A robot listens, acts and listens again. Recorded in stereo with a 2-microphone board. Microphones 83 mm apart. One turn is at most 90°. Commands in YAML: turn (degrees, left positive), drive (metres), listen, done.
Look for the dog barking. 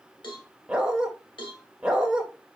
turn: -30
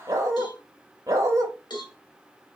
turn: -90
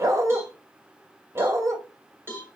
turn: -45
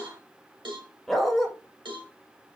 done: "Found it: a dog barking, straight ahead, under 1 m away."